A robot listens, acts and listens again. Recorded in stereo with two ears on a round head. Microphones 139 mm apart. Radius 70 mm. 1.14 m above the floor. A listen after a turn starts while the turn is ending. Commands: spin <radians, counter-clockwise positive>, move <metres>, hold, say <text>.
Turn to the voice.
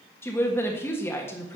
spin 0.26
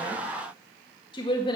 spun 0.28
spin 2.62
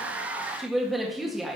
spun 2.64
say Facing the woman speaking, 1 to 2 m away.